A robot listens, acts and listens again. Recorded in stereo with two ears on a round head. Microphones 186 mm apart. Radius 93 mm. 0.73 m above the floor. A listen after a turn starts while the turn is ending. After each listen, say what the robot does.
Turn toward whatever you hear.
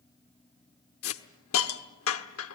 Turn 75° left.
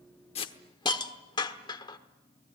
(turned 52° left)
Turn 20° left.
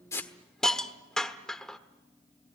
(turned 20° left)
Found it: a hiss, straight ahead, 1 to 2 m away.